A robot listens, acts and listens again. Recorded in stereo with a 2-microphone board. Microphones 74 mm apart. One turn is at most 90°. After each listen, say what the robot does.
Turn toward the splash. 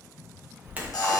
Turn 20° right.
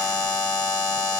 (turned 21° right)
Keep listening.
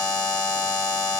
I heard a splash, but can't make it out now. It was about straight ahead or 135° right.